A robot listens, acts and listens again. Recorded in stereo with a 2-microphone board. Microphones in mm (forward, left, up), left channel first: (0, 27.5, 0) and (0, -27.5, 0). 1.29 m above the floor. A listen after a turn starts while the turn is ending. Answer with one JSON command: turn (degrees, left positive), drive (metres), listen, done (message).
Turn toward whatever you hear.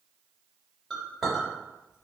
{"turn": 30}
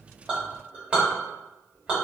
{"turn": -25}
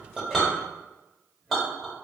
{"done": "Found it: a clink, straight ahead, 1 to 2 m away."}